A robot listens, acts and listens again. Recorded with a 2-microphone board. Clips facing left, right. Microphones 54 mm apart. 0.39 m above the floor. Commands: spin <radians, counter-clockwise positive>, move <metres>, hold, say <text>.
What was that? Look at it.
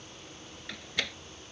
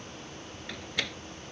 spin 0.52
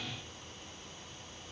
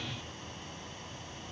hold
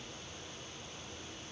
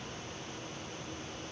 say I heard a door slam, but can't make it out now. It was about 30° right or 150° left.